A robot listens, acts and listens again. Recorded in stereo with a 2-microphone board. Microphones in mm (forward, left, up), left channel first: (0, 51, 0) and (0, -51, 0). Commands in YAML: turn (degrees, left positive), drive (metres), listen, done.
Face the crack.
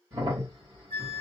turn: -40
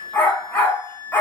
listen: true
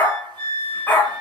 done: "I heard a crack, but can't make it out now. It was about straight ahead or 100° right."